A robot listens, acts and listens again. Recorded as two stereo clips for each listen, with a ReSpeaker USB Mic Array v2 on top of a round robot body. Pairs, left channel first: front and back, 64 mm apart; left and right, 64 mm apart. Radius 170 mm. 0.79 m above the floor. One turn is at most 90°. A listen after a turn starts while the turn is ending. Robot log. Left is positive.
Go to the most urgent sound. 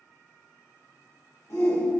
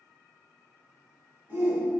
note: The shout: 35° right.
cmd yaw -35
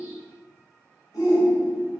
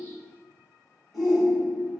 cmd fwd 1.0
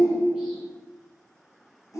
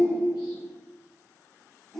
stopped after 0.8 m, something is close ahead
end: Arrived at the shout, straight ahead.